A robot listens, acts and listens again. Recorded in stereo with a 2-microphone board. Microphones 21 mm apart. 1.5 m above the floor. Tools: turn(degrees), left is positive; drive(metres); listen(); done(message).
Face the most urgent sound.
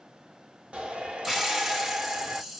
turn(degrees=-70)
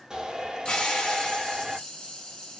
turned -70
turn(degrees=-40)
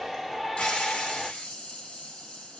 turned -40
done("Found it: a shout, straight ahead.")